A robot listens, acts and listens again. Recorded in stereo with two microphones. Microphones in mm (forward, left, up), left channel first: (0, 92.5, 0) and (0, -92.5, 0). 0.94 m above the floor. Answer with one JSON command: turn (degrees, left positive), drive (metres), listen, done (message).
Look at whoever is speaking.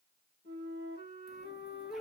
{"listen": true}
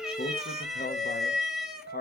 {"turn": 60}
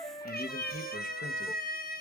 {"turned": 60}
{"listen": true}
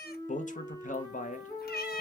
{"turn": 50}
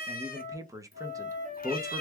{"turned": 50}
{"turn": -20}
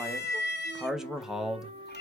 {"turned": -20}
{"done": "Facing the man speaking."}